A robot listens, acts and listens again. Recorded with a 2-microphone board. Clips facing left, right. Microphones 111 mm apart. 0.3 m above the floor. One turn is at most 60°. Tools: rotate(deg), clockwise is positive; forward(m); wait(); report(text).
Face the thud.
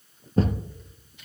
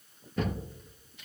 rotate(-35)
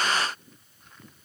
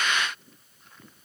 wait()
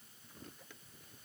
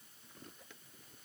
report("I heard a thud, but can't make it out now. It was about straight ahead or 110° left.")